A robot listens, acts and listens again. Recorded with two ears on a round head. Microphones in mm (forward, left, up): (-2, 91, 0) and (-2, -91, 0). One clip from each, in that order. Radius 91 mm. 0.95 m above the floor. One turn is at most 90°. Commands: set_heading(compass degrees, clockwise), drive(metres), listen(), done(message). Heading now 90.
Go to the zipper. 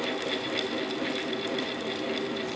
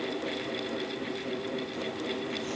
listen()
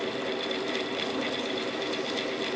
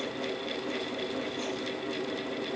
listen()
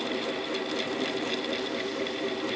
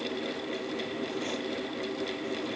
done("I can't make out a zipper to turn to.")